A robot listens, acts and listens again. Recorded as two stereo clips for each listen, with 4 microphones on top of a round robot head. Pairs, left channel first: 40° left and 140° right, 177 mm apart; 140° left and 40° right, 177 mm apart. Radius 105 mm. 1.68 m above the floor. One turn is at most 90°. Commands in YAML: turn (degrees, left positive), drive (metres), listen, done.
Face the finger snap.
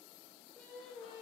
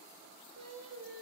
listen: true
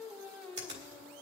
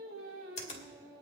turn: -90
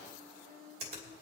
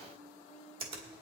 turn: -90
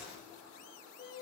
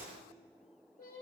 turn: -10
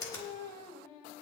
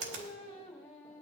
turn: -30
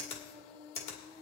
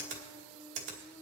turn: -20
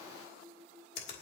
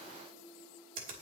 done: "Found it: a finger snap, straight ahead."